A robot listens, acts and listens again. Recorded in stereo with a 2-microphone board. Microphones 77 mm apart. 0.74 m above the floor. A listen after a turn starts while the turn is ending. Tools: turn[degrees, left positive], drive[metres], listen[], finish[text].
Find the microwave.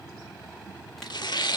Action: listen[]
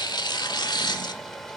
Action: listen[]
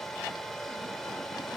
Action: finish[I can't make out a microwave to turn to.]